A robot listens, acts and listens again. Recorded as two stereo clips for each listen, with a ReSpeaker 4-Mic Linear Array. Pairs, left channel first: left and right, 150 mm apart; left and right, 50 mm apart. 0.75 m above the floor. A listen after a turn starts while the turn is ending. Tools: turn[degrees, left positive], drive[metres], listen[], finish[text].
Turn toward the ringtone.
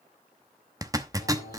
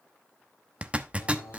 Action: listen[]
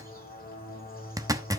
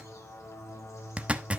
Action: listen[]
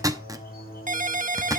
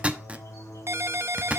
Thought: The ringtone: about 60° right or 120° right.
Action: turn[-60]
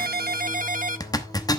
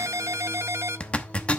Thought: So it is at 65° right.
Action: turn[-65]
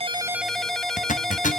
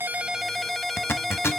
Action: finish[Found it: a ringtone, straight ahead, under 1 m away.]